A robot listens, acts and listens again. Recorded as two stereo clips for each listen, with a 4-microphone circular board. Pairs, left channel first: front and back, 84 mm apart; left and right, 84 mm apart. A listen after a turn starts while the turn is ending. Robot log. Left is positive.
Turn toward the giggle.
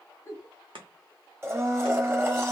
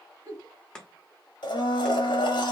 note: The giggle: 55° right.
cmd yaw -55
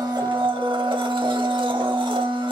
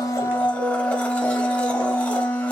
cmd idle
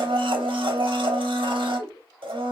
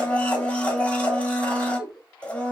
note: The giggle is now 10° right.
cmd yaw -10
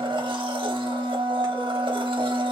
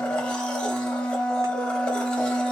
cmd idle
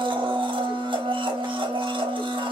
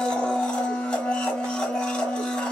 cmd idle
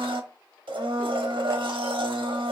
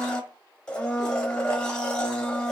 end: I heard a giggle from this way, but can't make it out now.